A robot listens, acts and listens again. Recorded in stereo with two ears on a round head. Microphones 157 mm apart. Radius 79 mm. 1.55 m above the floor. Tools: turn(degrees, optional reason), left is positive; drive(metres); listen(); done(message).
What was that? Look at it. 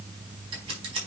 turn(degrees=-30, reason="The scissors: about 30° right or 150° right.")
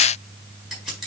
done("Facing the scissors, over 4 m away.")